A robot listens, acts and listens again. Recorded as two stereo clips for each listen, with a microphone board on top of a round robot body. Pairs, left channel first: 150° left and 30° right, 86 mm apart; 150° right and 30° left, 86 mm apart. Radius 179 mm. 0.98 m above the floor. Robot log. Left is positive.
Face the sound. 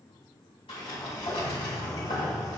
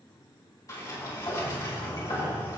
note: The sliding door: 160° left.
cmd yaw +160
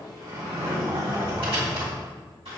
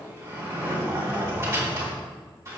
note: The sliding door is now 25° right.
cmd yaw -25
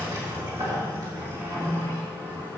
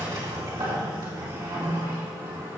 note: The sliding door is now 10° left.
cmd yaw +10
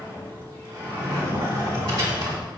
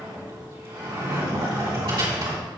end: Found it: a sliding door, straight ahead.